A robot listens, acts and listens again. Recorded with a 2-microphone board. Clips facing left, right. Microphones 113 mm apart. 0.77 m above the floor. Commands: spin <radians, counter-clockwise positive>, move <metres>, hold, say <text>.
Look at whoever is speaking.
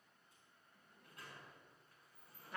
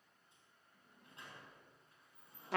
hold
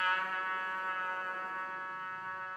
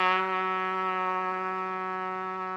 hold
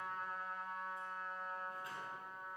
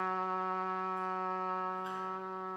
say I can't make out anyone speaking to turn to.